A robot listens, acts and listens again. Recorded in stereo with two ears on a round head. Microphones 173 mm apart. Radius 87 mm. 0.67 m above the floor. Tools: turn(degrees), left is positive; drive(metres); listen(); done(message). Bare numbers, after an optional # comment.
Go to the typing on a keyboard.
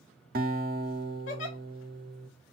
listen()
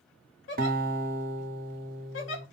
listen()
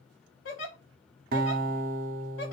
done("I can't make out typing on a keyboard, only a giggle and a guitar.")